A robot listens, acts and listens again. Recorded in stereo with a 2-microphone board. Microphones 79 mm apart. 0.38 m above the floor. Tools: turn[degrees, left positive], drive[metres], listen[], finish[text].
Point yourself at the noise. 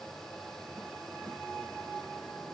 Action: listen[]
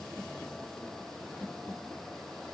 Action: listen[]
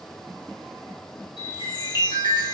Action: turn[90]
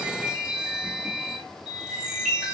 Thought: So it is at 10° right.
Action: turn[-10]
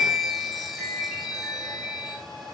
Action: finish[Found it: a chime, straight ahead, over 4 m away.]